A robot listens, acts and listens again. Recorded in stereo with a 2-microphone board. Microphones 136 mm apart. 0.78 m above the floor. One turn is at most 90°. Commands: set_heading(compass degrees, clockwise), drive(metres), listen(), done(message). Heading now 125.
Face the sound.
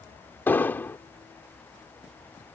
set_heading(95)
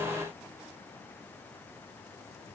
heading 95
listen()
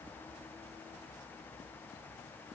done("I heard an explosion, but can't make it out now. It was about 15° right or 135° left.")